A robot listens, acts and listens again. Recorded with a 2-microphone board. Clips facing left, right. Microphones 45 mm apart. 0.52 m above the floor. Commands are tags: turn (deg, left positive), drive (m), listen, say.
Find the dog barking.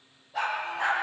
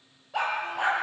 <turn deg="-90"/>
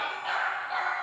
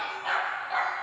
<say>Facing the dog barking.</say>